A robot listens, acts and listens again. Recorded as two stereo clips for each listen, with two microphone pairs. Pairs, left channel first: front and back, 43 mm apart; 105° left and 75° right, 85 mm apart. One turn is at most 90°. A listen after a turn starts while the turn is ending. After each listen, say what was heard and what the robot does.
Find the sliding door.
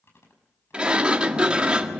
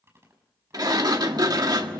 The sliding door: 115° right. Turn 90° right.
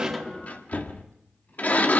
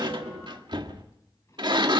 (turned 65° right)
The sliding door is now 50° right. Turn 50° right.
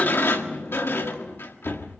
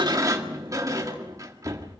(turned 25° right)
The sliding door is now 25° right. Turn 25° right.
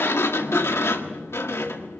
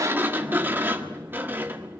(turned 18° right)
Found it: a sliding door, straight ahead, 1 to 2 m away.